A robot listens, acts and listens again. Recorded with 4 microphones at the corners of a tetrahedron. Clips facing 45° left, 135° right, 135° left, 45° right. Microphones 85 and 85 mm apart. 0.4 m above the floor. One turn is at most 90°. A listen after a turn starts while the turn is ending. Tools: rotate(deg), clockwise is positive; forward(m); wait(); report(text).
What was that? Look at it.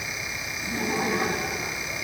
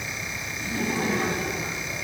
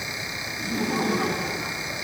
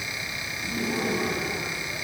rotate(-90)
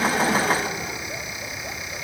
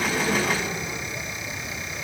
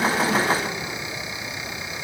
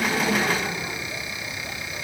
rotate(-30)
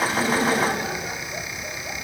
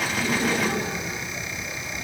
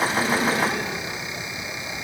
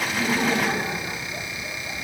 rotate(-15)
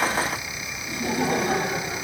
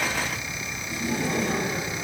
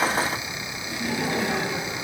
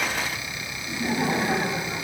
rotate(-15)
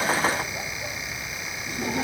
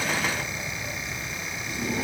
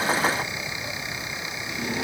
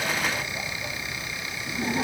report("Facing the laughter.")